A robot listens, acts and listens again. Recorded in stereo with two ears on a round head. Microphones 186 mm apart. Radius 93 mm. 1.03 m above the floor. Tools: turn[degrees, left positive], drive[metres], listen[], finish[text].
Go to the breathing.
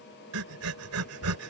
Action: turn[-90]
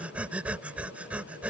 Action: drive[1.0]
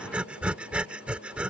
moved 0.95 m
Action: drive[1.0]
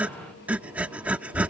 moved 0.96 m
Action: drive[1.0]
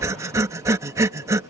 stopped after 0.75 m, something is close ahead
Thought: The breathing is now 15° right.
Action: turn[-15]
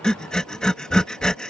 Action: finish[I am next to the breathing.]